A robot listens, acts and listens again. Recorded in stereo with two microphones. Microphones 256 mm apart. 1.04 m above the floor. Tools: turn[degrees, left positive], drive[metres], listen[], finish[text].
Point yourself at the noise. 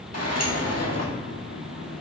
Thought: The sliding door: about 75° left or 105° left.
Action: turn[75]
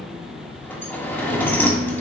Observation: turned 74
Thought: So it is at 10° left.
Action: turn[10]
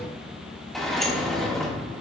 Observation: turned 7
Action: finish[Found it: a sliding door, straight ahead.]